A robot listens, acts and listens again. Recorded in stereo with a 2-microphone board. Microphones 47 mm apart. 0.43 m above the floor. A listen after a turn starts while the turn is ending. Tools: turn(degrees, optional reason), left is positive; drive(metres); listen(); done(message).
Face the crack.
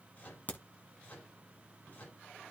turn(degrees=35, reason="The crack: about 35° left or 145° left.")
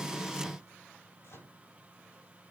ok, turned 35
listen()
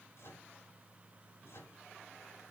done("I heard a crack, but can't make it out now. It was about straight ahead or 110° left.")